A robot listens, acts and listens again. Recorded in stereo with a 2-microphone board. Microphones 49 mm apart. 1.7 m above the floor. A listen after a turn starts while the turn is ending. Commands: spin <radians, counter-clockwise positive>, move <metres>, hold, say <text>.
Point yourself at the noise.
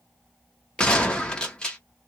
spin 0.35
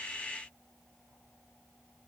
hold
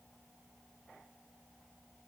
say I heard a gunshot, but can't make it out now. It was about straight ahead or 140° left.